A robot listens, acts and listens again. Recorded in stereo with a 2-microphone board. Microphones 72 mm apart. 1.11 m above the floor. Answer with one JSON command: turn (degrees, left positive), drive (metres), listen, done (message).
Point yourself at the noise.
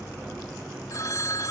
{"turn": 55}
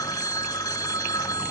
{"turn": 70}
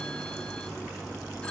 {"listen": true}
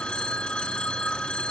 {"turn": 15}
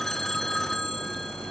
{"done": "Facing the phone ringing."}